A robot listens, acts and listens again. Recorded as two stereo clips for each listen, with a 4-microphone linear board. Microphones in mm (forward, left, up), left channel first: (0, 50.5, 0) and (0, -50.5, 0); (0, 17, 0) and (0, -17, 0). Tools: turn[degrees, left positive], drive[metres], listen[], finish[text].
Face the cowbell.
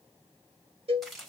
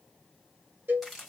Action: turn[-90]
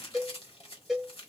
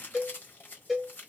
Action: finish[Facing the cowbell.]